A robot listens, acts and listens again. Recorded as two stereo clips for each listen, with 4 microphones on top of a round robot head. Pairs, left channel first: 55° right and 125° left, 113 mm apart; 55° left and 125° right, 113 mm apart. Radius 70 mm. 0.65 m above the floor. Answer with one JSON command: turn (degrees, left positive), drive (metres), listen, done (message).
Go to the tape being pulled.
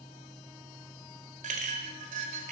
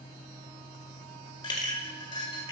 {"listen": true}
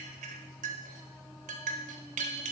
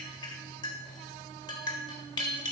{"listen": true}
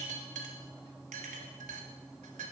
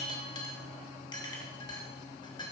{"done": "I can't make out tape being pulled, only a clink."}